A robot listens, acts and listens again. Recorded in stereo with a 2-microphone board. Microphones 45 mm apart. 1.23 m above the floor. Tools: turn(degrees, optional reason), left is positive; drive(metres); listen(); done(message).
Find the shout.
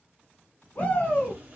turn(degrees=40, reason="The shout: about 40° left or 140° left.")
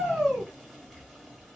done("Facing the shout.")